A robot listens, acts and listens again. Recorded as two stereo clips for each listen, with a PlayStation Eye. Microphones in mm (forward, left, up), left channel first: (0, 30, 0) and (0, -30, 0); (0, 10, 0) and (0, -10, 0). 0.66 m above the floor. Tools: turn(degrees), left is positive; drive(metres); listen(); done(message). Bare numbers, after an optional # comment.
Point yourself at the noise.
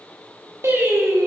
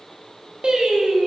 # The singing: about 55° right or 125° right.
turn(-55)
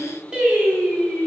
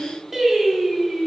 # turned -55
# So it is at 25° right.
turn(-25)
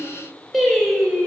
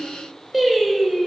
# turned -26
# The singing is now 10° right.
turn(-10)
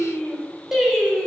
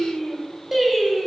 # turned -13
done("Facing the singing.")